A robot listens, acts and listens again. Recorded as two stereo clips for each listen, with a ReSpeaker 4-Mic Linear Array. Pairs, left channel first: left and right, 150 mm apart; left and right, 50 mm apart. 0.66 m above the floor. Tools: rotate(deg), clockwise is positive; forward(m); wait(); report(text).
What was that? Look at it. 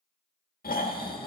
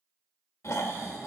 rotate(-75)
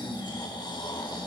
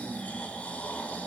rotate(-30)
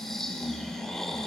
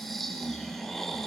report("Facing the snoring.")